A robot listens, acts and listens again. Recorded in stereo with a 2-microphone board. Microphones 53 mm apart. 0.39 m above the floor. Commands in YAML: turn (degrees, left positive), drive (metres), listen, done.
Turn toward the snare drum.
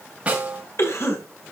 turn: -25
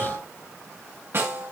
turn: -130
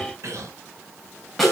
done: "Found it: a snare drum, straight ahead, over 4 m away."